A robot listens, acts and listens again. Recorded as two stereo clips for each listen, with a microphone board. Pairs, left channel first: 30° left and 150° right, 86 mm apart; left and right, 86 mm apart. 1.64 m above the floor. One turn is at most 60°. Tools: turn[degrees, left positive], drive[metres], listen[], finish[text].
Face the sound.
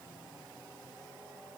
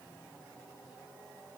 Action: listen[]
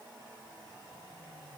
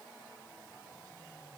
Action: listen[]
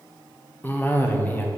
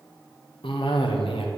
Thought: The cough: 95° left.
Action: turn[60]
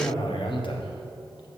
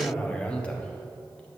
Thought: The cough is now 15° left.
Action: turn[15]
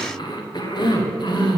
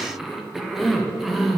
Action: finish[Facing the cough.]